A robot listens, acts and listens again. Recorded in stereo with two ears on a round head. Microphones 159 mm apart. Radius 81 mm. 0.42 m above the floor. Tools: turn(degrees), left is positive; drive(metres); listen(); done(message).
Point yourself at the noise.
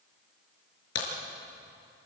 turn(degrees=90)
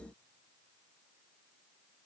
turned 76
turn(degrees=15)
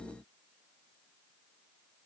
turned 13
done("Facing where the crack came from. I can't hear it now.")